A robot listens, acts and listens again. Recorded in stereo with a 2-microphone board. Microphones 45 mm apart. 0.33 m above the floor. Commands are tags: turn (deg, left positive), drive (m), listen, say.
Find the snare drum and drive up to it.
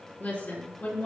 <listen/>
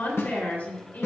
<turn deg="90"/>
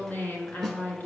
<turn deg="10"/>
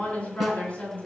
<listen/>
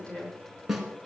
<drive m="1.0"/>
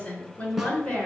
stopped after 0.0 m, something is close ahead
<say>Blocked. The snare drum is further on, straight ahead.</say>